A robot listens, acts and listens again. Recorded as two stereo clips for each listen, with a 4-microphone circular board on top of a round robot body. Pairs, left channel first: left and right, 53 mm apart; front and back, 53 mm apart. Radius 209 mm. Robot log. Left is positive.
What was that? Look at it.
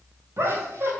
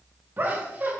note: The laughter: 130° right.
cmd yaw -130
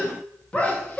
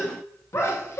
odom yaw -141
note: The laughter is now 25° left.
cmd yaw +25
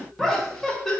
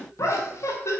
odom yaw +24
end: Found it: laughter, straight ahead.